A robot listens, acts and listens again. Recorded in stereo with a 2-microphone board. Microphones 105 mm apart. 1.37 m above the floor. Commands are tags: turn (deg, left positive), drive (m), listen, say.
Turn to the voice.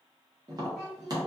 <turn deg="-30"/>
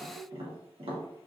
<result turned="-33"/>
<turn deg="-140"/>
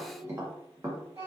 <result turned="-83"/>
<turn deg="-60"/>
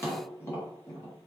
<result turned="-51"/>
<turn deg="-10"/>
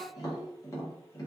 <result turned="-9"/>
<say>Found it: a child speaking, straight ahead.</say>